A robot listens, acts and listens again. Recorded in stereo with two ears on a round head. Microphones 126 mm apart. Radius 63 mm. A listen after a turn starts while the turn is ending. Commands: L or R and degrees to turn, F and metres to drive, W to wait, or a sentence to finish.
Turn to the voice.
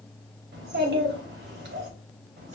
R90
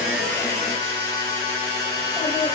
W
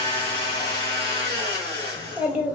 R10
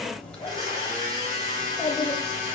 Found it: a child speaking, straight ahead.